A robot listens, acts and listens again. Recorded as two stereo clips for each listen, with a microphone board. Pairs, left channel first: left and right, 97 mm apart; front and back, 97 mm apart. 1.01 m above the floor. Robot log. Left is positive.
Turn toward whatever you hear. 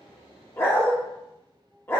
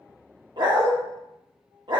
note: The dog barking: 150° left.
cmd yaw +150
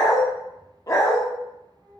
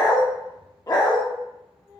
note: The dog barking is now 40° left.
cmd yaw +40
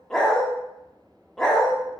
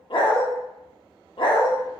end: Found it: a dog barking, straight ahead, under 1 m away.